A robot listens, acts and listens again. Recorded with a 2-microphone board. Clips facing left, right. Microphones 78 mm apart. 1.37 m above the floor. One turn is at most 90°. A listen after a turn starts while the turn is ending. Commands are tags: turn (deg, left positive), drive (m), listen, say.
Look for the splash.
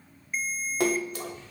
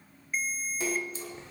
<turn deg="65"/>
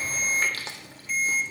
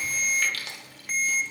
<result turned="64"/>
<listen/>
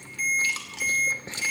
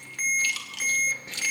<say>I heard a splash, but can't make it out now. It was about straight ahead or 50° left.</say>